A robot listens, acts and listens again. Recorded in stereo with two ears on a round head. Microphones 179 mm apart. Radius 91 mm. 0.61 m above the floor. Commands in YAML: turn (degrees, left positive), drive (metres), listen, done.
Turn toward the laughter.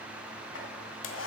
listen: true
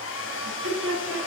turn: -70
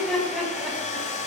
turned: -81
done: "Found it: laughter, straight ahead, over 4 m away."